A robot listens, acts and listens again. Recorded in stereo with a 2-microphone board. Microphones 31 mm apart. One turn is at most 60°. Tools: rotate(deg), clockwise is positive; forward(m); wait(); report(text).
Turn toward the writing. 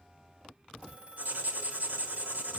rotate(60)
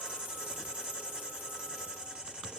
rotate(30)
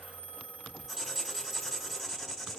report("Facing the writing.")